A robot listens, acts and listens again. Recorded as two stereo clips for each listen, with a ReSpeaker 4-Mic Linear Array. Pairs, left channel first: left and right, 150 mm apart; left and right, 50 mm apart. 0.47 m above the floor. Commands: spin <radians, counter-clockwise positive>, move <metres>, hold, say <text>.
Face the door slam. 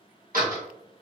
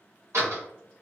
spin -1.22
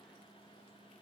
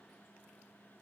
hold
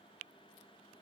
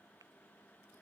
say I heard a door slam, but can't make it out now. It was about straight ahead or 40° right.